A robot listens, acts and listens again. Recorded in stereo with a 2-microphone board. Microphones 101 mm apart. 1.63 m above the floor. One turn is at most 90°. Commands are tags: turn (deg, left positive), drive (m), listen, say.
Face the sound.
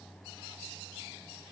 <listen/>
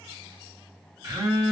<turn deg="-35"/>
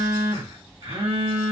<turn deg="-90"/>
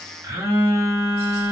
<turn deg="-30"/>
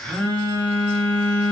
<turn deg="15"/>
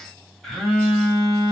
<say>Found it: a phone buzzing, straight ahead.</say>